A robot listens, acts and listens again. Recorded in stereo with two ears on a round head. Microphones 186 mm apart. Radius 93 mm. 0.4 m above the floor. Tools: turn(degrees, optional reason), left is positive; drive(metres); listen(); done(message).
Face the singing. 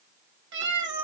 listen()
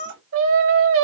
turn(degrees=-70, reason="The singing: about 70° right or 110° right.")
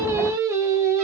turn(degrees=-15, reason="So it is at 15° right.")
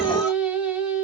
done("Facing the singing.")